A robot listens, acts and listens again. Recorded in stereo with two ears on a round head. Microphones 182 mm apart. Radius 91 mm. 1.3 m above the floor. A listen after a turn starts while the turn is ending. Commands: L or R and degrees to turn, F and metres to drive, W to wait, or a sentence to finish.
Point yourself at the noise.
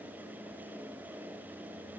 W
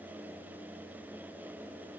W
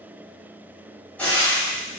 L30
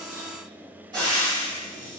R25
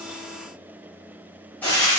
Found it: frying, straight ahead.